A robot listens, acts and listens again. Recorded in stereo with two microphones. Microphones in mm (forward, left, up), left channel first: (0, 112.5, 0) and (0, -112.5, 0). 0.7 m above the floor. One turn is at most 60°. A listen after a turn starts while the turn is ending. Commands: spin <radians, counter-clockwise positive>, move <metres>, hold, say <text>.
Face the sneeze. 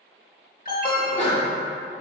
spin 0.52
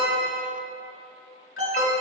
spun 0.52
hold
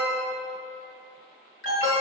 say I heard a sneeze, but can't make it out now. It was about straight ahead or 120° left.